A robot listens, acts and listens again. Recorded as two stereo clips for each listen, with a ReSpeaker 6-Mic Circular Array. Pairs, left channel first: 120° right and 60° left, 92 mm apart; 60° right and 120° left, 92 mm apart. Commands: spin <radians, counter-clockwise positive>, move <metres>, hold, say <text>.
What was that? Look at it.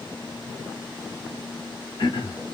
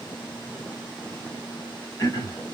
spin -1.75
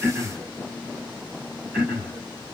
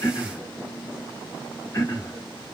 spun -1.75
say Facing the throat clearing, 1 to 2 m away.